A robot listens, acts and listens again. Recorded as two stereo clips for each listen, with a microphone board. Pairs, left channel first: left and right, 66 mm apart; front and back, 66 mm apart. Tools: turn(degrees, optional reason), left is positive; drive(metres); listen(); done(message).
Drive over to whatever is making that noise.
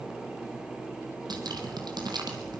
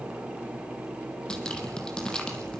turn(degrees=-80, reason="The dripping: 80° right.")
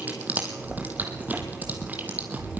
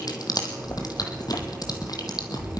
turn(degrees=-25, reason="The dripping is now 25° right.")
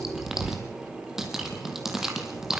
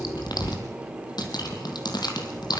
drive(metres=1.0)
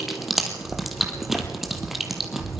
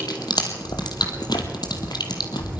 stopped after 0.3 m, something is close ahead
done("Something is in my way. I am facing the dripping but have not reached it.")